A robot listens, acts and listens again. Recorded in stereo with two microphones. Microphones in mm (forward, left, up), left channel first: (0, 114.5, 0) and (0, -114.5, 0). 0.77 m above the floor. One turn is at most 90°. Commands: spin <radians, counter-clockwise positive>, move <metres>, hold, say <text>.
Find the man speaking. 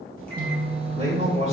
spin -0.61
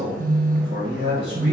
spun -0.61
spin -1.57
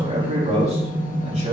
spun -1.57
spin -0.61
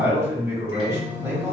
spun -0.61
spin -0.26
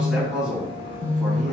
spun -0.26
say Facing the man speaking.